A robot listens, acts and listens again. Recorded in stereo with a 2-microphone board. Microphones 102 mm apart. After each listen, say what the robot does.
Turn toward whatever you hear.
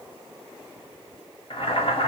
Turn 60° left.
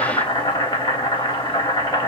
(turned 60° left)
Turn 55° left.
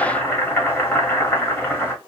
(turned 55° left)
Turn 25° left.
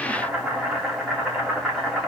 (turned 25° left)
Found it: boiling, straight ahead.